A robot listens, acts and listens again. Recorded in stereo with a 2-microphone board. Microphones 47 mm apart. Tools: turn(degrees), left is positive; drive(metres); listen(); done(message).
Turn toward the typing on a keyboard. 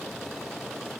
listen()
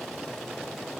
listen()
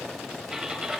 turn(degrees=-30)
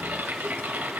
turn(degrees=-135)
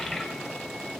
listen()
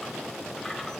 listen()
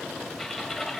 turn(degrees=10)
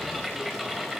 done("Found it: typing on a keyboard, straight ahead, 1 to 2 m away.")